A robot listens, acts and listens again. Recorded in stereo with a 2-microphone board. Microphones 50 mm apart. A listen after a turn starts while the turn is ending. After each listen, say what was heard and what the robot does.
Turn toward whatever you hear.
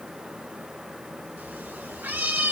The cat meowing: about 40° right or 140° right. Turn 40° right.
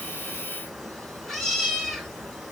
Found it: a cat meowing, straight ahead.